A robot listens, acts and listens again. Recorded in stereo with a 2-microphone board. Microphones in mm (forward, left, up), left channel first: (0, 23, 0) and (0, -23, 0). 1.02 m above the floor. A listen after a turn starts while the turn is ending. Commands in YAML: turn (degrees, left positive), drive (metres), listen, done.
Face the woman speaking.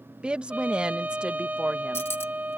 turn: -25
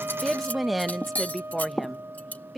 done: "Facing the woman speaking."